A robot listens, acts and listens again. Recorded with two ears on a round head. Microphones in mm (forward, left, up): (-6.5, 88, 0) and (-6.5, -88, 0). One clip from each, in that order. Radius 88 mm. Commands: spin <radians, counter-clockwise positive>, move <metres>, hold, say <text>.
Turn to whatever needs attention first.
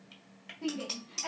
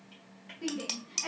spin -0.52
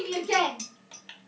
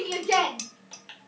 spin -2.36
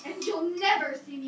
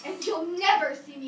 spin -0.79
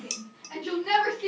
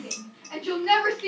say Facing the shout, 1 to 2 m away.